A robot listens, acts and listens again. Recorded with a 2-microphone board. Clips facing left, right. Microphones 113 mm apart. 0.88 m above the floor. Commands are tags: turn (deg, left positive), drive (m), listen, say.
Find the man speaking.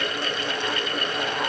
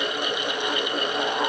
<listen/>
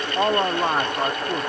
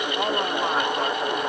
<turn deg="30"/>
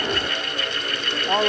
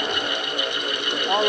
<say>Found it: a man speaking, straight ahead.</say>